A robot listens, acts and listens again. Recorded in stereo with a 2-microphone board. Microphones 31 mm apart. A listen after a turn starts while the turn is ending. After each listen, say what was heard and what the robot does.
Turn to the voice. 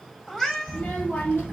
Turn 90° left.
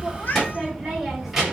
Found it: a child speaking, straight ahead.